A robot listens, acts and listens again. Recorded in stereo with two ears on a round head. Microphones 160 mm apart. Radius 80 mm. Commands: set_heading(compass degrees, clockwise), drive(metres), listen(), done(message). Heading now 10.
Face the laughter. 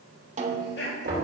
set_heading(305)
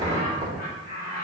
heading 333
set_heading(283)
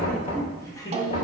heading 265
set_heading(245)
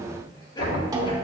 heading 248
listen()
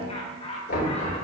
set_heading(218)
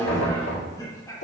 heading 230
set_heading(210)
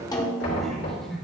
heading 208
done("Found it: laughter, straight ahead.")